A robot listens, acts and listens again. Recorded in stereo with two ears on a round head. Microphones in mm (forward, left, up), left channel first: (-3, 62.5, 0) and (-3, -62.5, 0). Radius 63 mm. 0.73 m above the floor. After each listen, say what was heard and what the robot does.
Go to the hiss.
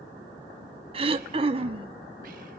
Keep listening.
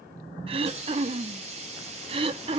The hiss: about 50° right or 130° right. Turn 50° right.
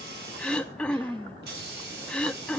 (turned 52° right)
So it is at 80° right. Turn 80° right.
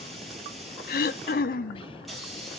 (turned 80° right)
Drive 1.0 m forward.
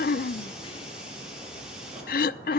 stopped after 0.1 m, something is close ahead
Keep listening.
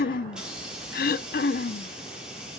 Blocked. The hiss is further on, straight ahead.